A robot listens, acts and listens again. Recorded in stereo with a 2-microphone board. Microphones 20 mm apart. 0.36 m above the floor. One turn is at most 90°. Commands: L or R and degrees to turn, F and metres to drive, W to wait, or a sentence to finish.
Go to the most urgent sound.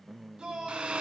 R50
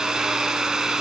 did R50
W
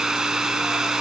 W
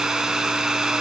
I heard a shout, but can't make it out now. It was about straight ahead or 80° right. I did not reach it.